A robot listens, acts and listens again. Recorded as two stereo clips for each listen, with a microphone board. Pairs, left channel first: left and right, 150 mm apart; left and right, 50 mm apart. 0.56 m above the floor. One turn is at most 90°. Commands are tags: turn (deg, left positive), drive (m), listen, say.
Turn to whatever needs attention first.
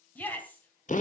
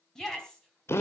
<turn deg="30"/>
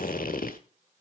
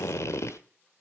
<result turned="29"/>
<listen/>
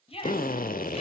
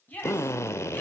<turn deg="90"/>
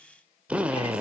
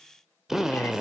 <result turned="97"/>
<turn deg="40"/>
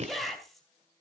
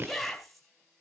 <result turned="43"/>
<say>Found it: a shout, straight ahead.</say>